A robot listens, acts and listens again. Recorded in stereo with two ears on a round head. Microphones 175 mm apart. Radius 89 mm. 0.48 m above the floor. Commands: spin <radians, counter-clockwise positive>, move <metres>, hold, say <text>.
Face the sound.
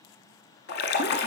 spin 0.96
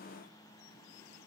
hold
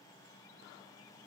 say I heard a splash, but can't make it out now. It was about straight ahead or 70° left.